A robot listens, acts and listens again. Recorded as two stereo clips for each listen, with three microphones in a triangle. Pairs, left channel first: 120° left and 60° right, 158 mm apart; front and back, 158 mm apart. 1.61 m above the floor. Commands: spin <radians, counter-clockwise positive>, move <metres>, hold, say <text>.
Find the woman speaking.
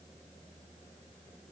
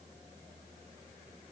hold
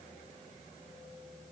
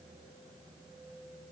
hold
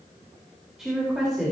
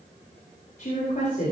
spin 0.44
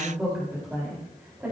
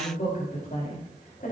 spin 0.35
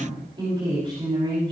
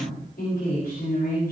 say Found it: a woman speaking, straight ahead.